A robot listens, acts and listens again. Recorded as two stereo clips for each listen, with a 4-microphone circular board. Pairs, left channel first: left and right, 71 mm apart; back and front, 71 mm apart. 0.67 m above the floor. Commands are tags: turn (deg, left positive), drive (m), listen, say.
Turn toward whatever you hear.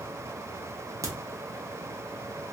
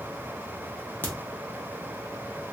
<turn deg="-120"/>
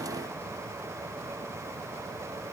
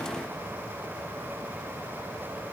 <say>Facing where the crack came from. I can't hear it now.</say>